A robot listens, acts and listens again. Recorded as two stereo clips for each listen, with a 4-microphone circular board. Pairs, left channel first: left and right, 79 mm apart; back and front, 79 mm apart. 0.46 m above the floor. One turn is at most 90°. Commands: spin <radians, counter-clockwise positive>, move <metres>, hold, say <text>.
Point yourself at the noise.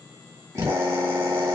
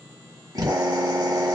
spin -0.61
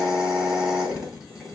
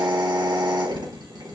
spin -0.17
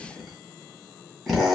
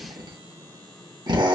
say Found it: a drill, straight ahead, 1 to 2 m away.